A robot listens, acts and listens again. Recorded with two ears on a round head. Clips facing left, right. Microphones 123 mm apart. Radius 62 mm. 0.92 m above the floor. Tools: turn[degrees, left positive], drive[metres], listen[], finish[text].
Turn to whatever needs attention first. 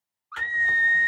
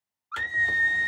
Thought: The scream: about 45° right or 135° right.
Action: turn[-45]
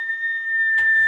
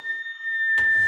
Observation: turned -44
Thought: So it is at 10° right.
Action: turn[-10]
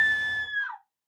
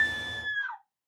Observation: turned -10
Action: finish[Facing the scream, under 1 m away.]